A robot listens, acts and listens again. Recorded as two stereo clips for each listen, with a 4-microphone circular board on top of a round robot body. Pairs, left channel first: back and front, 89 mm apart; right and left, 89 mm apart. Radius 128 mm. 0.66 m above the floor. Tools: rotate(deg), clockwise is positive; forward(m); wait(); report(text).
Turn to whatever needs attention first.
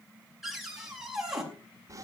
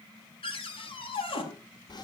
wait()
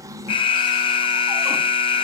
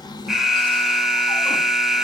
rotate(-175)
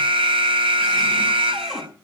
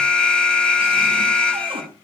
rotate(10)
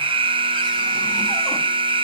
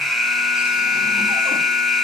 report("Found it: an alarm, straight ahead.")